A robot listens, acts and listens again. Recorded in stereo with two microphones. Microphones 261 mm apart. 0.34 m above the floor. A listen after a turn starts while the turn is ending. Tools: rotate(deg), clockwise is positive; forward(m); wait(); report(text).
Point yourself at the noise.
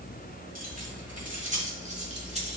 rotate(30)
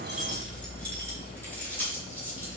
rotate(-10)
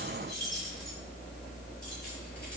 report("Facing the keys jangling, over 4 m away.")